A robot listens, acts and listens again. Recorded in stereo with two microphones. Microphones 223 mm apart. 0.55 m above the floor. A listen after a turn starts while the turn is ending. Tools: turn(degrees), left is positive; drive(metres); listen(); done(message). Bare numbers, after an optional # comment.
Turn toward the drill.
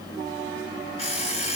listen()
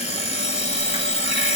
listen()
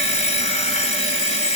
done("I can't make out a drill, only an alarm clock.")